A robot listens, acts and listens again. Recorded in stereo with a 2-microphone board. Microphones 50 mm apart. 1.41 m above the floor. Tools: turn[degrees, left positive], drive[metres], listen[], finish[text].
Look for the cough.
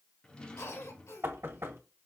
Thought: The cough: about 70° left or 110° left.
Action: turn[70]
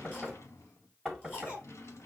Thought: So it is at 40° left.
Action: turn[40]
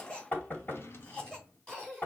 Thought: The cough is now 15° left.
Action: turn[15]
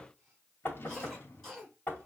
Action: finish[Facing the cough.]